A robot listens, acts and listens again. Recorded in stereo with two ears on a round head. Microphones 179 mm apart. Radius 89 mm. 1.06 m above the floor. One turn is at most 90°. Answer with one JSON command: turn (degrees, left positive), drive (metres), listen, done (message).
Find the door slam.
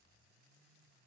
{"listen": true}
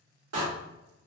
{"turn": -90}
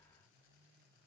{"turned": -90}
{"done": "I heard a door slam from this way, but can't make it out now."}